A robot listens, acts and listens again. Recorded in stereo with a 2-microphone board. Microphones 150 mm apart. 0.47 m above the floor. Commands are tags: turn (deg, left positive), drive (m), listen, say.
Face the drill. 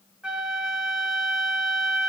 <listen/>
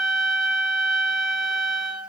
<listen/>
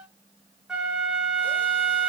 <say>I can't make out a drill to turn to.</say>